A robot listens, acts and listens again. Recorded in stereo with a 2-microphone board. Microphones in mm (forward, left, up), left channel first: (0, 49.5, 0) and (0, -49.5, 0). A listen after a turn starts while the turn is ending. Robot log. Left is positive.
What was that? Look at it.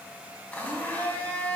cmd yaw +30
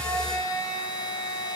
note: So it is at 135° left.
cmd yaw +135
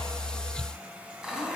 end: Found it: a blender, straight ahead.